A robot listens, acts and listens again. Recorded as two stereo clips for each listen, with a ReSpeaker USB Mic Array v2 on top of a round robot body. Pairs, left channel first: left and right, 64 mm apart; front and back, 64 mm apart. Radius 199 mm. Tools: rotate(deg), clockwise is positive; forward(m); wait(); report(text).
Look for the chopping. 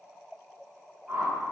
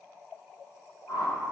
wait()
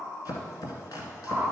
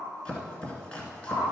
rotate(-70)
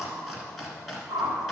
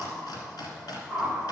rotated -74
report("Found it: chopping, straight ahead.")